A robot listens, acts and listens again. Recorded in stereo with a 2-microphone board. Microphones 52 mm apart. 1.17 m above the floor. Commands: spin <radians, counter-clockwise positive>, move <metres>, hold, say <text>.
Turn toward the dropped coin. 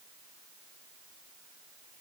hold
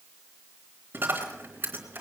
spin -0.70
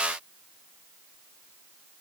hold
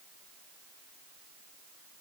say I heard a dropped coin, but can't make it out now. It was about straight ahead or 100° right.